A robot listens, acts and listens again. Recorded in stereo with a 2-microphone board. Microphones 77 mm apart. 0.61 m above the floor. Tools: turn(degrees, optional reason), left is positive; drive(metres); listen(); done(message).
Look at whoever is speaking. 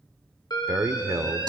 turn(degrees=-40, reason="The man speaking: about 40° right or 140° right.")
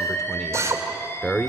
done("Facing the man speaking.")